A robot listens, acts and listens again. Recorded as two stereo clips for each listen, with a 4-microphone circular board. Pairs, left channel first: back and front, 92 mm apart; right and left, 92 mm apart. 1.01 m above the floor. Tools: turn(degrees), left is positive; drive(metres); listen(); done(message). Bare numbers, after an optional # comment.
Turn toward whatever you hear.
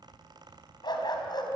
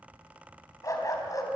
# The dog barking: 140° right.
turn(-140)
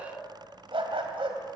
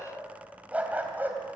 # The dog barking is now 20° left.
turn(20)
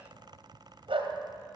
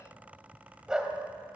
# The dog barking is now 10° left.
turn(10)
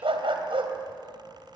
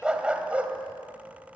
# The dog barking is now 15° left.
turn(15)
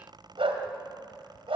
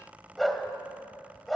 done("Facing the dog barking.")